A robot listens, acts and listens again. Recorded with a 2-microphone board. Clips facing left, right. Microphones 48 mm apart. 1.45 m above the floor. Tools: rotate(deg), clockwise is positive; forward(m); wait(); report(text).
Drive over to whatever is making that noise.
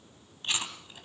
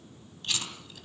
rotate(-25)
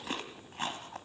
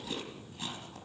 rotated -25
rotate(-130)
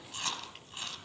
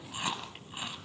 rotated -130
rotate(15)
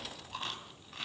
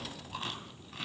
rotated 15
forward(1.0)
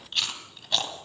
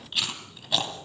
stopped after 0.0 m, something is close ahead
report("Blocked. The chewing is further on, straight ahead.")